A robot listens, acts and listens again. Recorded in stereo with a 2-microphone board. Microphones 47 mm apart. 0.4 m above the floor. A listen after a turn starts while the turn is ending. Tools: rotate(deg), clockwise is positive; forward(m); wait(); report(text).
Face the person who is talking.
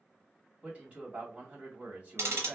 rotate(30)
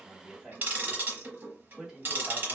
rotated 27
report("Facing the man speaking, 1 to 2 m away.")